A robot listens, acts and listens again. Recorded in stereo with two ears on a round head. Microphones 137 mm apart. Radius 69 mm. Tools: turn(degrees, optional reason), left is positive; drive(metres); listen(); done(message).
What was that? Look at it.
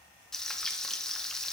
turn(degrees=30)
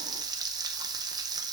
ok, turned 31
turn(degrees=-25, reason="So it is at 25° right.")
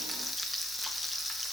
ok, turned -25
done("Found it: frying, straight ahead, under 1 m away.")